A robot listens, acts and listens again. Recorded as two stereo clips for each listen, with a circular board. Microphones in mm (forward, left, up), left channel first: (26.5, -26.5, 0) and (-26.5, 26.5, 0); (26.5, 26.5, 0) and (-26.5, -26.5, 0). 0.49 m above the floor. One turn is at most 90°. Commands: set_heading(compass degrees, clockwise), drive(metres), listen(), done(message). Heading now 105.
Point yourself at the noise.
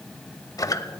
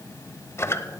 done("Facing the squeak.")